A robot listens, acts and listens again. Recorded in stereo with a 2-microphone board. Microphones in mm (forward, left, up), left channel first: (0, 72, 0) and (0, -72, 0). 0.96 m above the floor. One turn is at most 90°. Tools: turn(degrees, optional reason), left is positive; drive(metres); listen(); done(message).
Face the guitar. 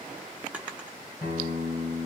turn(degrees=90)
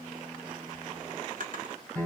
done("Found it: a guitar, straight ahead, 2 to 4 m away.")